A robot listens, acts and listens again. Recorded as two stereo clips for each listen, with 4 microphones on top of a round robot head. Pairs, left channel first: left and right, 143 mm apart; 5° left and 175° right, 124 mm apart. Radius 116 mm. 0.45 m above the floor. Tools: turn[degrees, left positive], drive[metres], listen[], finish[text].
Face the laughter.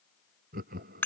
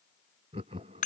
Thought: The laughter: 125° right.
Action: turn[-125]
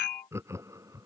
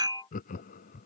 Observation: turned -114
Thought: The laughter is now 20° right.
Action: turn[-20]
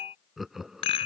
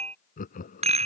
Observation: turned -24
Action: finish[Facing the laughter.]